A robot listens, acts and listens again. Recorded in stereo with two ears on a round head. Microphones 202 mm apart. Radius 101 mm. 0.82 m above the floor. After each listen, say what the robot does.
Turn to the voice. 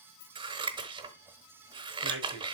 Turn 60° right.
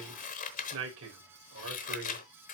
Turn 60° right.
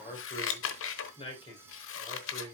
Turn 20° left.
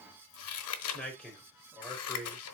Facing the man speaking.